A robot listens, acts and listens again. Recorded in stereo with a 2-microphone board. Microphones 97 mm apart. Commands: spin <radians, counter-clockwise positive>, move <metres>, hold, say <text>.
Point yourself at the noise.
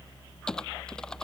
spin 0.52
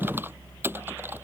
spin -0.35
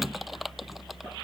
say Facing the typing on a keyboard.